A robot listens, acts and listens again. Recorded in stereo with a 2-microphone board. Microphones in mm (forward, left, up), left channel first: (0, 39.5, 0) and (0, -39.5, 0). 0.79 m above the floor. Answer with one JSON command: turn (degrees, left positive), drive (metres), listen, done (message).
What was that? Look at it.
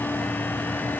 {"listen": true}
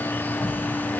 {"turn": -90}
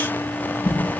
{"turn": 10}
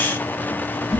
{"done": "Found it: a whoosh, straight ahead."}